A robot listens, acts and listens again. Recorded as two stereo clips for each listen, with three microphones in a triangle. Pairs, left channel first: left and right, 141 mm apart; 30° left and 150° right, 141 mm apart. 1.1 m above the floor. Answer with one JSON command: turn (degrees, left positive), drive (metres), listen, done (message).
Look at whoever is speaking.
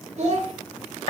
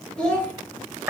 {"turn": -55}
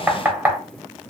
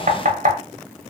{"listen": true}
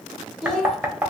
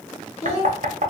{"done": "Found it: a child speaking, straight ahead."}